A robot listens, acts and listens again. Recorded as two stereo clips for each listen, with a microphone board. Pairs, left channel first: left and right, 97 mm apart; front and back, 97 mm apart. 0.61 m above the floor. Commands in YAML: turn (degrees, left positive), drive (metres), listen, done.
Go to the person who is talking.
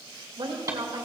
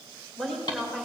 turn: -85
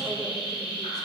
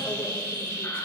listen: true
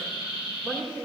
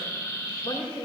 turn: 10
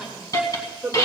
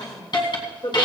drive: 1.0
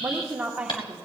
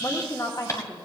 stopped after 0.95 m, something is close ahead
turn: -15
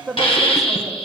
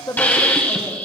done: "Arrived at the woman speaking, straight ahead."